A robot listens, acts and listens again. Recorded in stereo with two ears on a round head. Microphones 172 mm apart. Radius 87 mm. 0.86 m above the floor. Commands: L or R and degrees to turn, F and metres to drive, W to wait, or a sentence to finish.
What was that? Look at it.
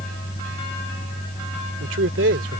R65
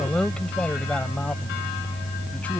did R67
Found it: a man speaking, straight ahead.